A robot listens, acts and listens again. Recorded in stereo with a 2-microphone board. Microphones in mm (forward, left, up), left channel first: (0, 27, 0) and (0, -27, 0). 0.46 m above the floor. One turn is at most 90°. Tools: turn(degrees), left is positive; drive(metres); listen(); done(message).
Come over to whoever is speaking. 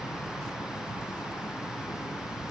listen()
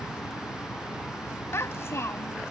turn(degrees=55)
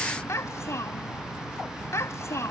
turn(degrees=65)
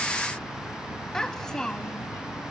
turn(degrees=10)
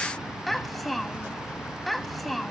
drive(metres=1.0)
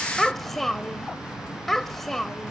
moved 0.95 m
drive(metres=1.0)
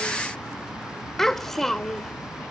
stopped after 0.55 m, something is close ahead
turn(degrees=10)
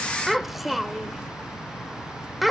done("Arrived at the child speaking, straight ahead.")